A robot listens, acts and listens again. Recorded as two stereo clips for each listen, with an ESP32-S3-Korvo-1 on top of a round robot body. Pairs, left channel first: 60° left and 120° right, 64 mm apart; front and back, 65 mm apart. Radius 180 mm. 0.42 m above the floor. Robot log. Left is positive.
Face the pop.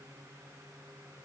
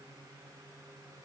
cmd idle
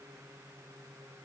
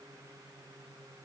cmd idle
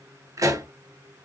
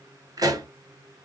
note: The pop: 160° right.
cmd yaw -160
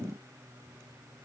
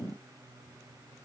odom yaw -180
note: Nothing new. It was at 20° left.
cmd yaw +20
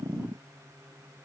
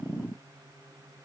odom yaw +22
end: I heard a pop from this way, but can't make it out now.